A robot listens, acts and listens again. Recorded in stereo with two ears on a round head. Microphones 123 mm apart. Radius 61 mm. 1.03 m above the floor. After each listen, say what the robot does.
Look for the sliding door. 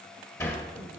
Turn 20° left.
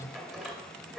Found it: a sliding door, straight ahead, 1 to 2 m away.